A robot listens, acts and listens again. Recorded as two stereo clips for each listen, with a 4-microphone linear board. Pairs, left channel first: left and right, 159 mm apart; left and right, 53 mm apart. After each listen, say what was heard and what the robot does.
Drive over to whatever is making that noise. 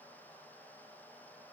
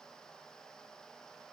Keep listening.
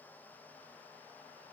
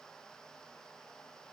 Keep listening.
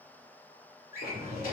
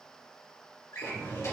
The drawer: about 65° left or 115° left. Turn 65° left.
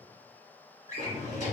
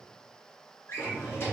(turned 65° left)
So it is at 50° left. Turn 50° left.
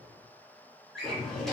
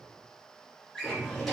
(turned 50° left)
Drive 1.0 m forward.
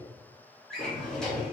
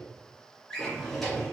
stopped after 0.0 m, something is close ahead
Blocked. The drawer is further on, straight ahead.